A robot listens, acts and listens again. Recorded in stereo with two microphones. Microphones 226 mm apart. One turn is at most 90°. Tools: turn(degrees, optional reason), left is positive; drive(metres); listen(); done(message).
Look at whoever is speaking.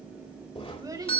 turn(degrees=-15, reason="The child speaking: about 15° right or 165° right.")
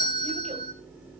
listen()
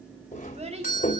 turn(degrees=-90, reason="So it is at 150° right.")
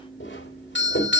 turn(degrees=-60, reason="Nothing new. It was at 60° right.")
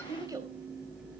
turn(degrees=-15, reason="The child speaking is now 15° right.")
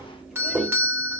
listen()
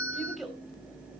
done("Found it: a child speaking, straight ahead, 2 to 4 m away.")